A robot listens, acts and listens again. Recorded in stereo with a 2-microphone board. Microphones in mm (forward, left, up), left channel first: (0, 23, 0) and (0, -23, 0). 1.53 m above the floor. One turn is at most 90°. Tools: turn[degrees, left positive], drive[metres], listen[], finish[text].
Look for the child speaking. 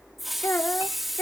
Thought: The child speaking: about 75° left or 105° left.
Action: turn[75]
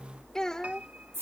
Thought: So it is at 15° left.
Action: turn[15]
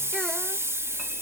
Action: listen[]
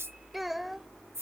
Action: finish[Facing the child speaking.]